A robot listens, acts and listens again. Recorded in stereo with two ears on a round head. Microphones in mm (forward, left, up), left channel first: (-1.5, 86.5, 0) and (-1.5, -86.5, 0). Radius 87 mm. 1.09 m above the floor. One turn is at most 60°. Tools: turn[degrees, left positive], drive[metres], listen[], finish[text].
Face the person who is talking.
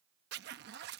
Action: listen[]
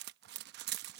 Action: listen[]
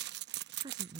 Thought: The woman speaking: about 25° right or 155° right.
Action: turn[-25]
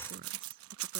Action: listen[]
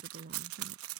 Thought: So it is at 130° right.
Action: turn[-60]
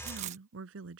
Thought: The woman speaking is now 75° right.
Action: turn[-60]
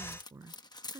Thought: The woman speaking is now 15° right.
Action: turn[-15]
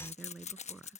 Action: finish[Found it: a woman speaking, straight ahead.]